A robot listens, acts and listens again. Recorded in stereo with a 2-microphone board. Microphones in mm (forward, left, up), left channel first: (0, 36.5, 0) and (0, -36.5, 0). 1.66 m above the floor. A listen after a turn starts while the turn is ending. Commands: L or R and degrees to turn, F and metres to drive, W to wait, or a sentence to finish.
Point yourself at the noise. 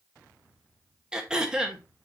R30
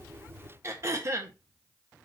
R140
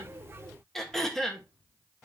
Found it: throat clearing, straight ahead, 1 to 2 m away.